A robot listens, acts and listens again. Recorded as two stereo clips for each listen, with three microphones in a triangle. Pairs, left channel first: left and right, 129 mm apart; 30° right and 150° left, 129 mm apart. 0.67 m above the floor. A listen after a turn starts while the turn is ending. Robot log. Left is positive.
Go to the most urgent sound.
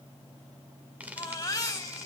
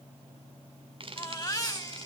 note: The baby crying: 30° left.
cmd yaw +30
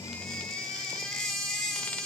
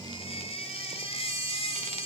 cmd fwd 1.0
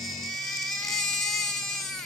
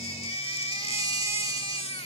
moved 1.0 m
cmd fwd 1.0
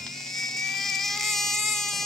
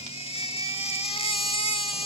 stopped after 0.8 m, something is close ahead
end: Arrived at the baby crying, straight ahead.